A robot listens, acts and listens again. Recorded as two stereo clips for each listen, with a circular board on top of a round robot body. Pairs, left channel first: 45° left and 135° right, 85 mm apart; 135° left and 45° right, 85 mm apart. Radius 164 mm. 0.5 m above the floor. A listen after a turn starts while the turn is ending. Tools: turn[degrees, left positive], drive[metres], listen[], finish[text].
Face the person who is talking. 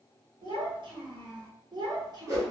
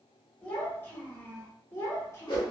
Thought: The child speaking: 170° right.
Action: turn[-170]
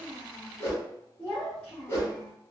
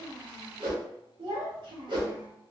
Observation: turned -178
Thought: The child speaking is now 35° right.
Action: turn[-35]
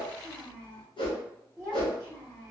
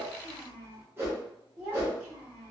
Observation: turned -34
Thought: The child speaking is now 20° right.
Action: turn[-20]
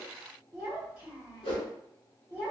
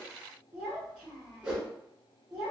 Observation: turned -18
Action: finish[Facing the child speaking.]